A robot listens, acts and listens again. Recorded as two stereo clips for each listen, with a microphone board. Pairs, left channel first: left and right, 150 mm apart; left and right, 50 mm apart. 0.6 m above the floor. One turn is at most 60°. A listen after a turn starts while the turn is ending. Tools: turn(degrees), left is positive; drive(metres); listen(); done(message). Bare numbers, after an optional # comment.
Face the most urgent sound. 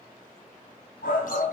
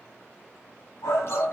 # The shout: about 70° left or 110° left.
turn(60)
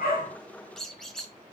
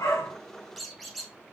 listen()
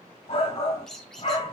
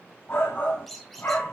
# So it is at 40° left.
turn(40)
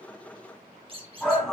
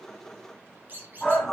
done("Facing the shout, 2 to 4 m away.")